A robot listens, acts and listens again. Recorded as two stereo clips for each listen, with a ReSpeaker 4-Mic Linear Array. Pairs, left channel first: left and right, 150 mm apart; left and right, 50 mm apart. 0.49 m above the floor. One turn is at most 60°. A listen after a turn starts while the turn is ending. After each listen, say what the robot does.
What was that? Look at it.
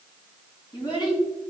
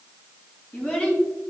Turn 30° left.
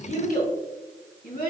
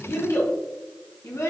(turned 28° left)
Turn 60° left.
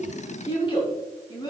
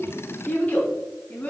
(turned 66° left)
Turn 30° left.
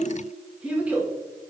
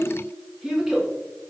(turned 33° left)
Turn 10° right.
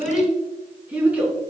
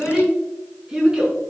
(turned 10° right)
Turn 10° right.
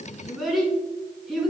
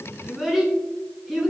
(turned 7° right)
Facing the child speaking.